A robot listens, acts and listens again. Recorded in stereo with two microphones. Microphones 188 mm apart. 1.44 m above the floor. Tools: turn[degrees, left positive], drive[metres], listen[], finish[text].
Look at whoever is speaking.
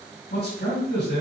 Thought: The man speaking: about 60° left or 120° left.
Action: turn[60]
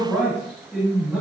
Action: finish[Facing the man speaking.]